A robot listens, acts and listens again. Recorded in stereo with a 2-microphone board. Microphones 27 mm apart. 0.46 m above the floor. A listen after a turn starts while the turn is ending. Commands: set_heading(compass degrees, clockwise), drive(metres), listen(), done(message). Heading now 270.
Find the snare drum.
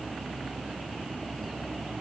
listen()
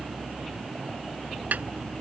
listen()
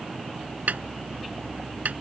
set_heading(0)
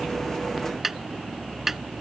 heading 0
set_heading(10)
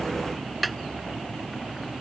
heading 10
done("Found it: a snare drum, straight ahead.")